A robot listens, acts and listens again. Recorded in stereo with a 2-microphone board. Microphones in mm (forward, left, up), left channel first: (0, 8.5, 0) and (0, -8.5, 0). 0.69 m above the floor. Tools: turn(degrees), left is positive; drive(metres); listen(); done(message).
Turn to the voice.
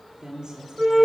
turn(degrees=-45)
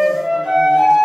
listen()
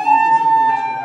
listen()
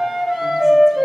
done("I heard a woman speaking, but can't make it out now. It was about straight ahead or 90° right.")